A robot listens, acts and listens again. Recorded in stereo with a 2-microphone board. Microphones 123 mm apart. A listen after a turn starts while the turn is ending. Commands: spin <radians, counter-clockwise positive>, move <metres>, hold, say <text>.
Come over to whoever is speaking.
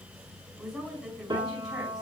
spin 0.52
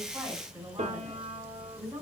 spin -0.52
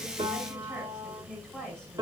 move 1.0
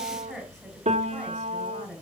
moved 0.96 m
move 1.0
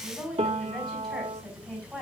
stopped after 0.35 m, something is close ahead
say Blocked. The woman speaking is further on, straight ahead.